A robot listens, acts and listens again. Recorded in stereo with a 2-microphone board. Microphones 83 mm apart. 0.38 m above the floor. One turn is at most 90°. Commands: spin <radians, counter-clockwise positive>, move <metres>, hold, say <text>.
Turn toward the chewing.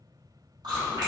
spin -1.05
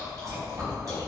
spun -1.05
spin -0.87
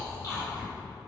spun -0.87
spin 0.70
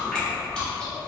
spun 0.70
spin 0.17
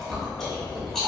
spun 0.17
say Found it: chewing, straight ahead.